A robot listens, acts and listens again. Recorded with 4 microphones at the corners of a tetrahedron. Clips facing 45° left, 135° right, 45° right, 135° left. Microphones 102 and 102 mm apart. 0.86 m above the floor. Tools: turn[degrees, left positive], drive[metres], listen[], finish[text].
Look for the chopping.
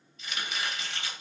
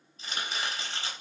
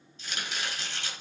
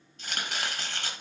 Thought: The chopping: 170° left.
Action: turn[170]
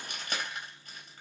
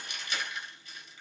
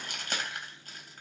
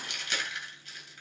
Action: finish[Facing the chopping.]